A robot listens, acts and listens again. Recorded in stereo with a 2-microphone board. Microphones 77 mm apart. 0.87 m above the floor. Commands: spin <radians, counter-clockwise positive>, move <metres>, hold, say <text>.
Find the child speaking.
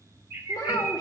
spin 0.87
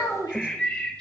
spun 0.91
spin 1.22
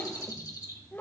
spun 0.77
spin 0.44
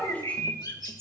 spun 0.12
spin 0.35
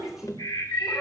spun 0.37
say Found it: a child speaking, straight ahead.